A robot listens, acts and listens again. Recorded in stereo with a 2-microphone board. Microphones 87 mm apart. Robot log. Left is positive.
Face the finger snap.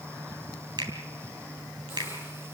note: The finger snap: about 60° right or 120° right.
cmd yaw -60
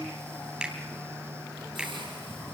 note: So it is at 10° right.
cmd yaw -10
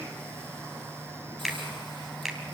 end: Facing the finger snap.